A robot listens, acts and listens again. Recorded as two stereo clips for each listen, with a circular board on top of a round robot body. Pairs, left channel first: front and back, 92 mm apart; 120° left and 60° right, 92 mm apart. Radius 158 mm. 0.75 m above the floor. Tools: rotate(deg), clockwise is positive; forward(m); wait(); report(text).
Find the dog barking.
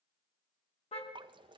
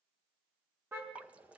wait()
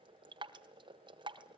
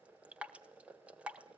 wait()
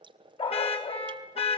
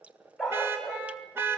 rotate(-30)
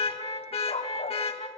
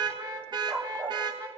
report("Facing the dog barking.")